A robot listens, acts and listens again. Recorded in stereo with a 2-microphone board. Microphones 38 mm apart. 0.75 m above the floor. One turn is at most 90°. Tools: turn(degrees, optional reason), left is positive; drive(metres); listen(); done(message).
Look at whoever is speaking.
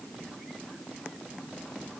listen()
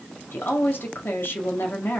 turn(degrees=70, reason="The woman speaking: about 70° left or 110° left.")
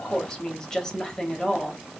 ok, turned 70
turn(degrees=15, reason="So it is at 15° left.")
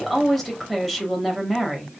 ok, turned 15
done("Facing the woman speaking, 1 to 2 m away.")